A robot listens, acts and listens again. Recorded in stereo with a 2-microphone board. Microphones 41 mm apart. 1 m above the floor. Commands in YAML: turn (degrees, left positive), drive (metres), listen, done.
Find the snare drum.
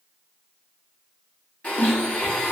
turn: 65
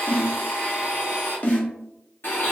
turn: 40
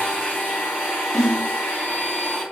done: "Facing the snare drum."